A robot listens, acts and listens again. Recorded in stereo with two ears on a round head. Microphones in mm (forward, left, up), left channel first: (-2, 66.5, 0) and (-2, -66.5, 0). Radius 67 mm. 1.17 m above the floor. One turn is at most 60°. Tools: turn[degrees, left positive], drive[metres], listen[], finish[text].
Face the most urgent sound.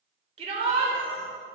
Thought: The shout: about 45° right or 135° right.
Action: turn[-45]
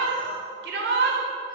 Thought: So it is at 90° right.
Action: turn[-60]
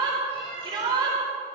Thought: The shout is now 30° right.
Action: turn[-30]
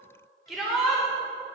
Action: finish[Found it: a shout, straight ahead, 2 to 4 m away.]